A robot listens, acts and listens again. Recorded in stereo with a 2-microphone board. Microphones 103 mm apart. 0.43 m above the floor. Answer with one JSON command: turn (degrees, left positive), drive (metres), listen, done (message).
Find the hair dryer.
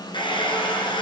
{"turn": 50}
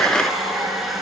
{"done": "Found it: a hair dryer, straight ahead, 1 to 2 m away."}